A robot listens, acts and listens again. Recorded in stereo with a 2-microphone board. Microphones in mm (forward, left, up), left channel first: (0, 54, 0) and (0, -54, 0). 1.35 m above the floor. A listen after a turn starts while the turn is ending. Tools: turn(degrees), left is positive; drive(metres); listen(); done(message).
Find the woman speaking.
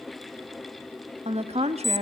turn(degrees=-90)
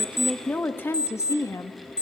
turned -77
turn(degrees=30)
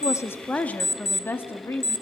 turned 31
turn(degrees=25)
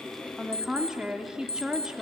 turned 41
turn(degrees=-10)
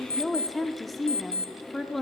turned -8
done("Found it: a woman speaking, straight ahead.")